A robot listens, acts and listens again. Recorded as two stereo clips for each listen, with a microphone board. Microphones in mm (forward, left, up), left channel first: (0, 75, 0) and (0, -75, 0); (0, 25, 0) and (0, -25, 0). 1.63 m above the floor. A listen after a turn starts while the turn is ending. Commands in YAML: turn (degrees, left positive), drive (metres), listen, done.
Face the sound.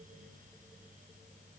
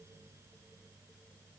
listen: true
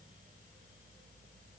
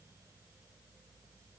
listen: true
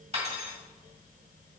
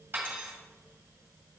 turn: -40
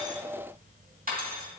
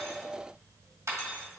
turn: -95
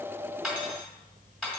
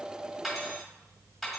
done: "Found it: cutlery clinking, straight ahead."